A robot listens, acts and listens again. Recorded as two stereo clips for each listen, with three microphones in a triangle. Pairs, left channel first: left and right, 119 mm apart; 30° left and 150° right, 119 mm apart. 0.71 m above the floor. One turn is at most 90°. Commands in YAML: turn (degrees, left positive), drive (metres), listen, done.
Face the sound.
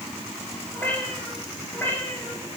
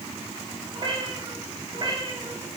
turn: 90
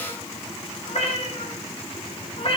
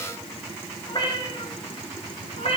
turn: 55
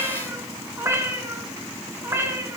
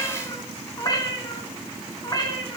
turn: -25
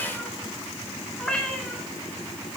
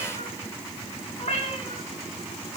done: "Found it: a cat meowing, straight ahead."